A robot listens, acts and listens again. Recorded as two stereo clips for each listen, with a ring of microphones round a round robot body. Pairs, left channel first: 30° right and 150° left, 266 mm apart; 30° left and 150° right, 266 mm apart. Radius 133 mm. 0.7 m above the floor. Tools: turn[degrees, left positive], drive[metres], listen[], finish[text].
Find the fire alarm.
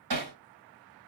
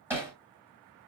Action: listen[]
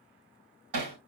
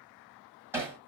Action: listen[]
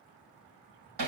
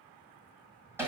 Action: finish[I can't make out a fire alarm, only hammering.]